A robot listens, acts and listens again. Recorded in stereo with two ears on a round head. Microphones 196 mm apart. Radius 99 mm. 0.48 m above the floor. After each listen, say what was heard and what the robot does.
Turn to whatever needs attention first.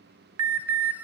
Turn 90° right.
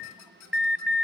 Facing the alarm, 2 to 4 m away.